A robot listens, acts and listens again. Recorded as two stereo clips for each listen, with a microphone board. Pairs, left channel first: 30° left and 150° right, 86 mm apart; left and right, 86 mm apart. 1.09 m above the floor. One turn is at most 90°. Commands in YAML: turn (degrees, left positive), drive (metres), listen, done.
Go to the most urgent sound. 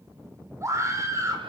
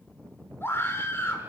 turn: 90
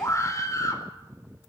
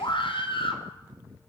turn: 85
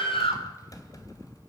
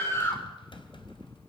turn: 30
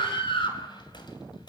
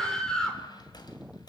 drive: 1.0
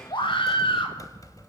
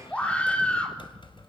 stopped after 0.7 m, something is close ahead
turn: 15
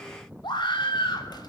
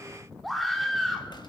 done: "Blocked. The scream is further on, straight ahead."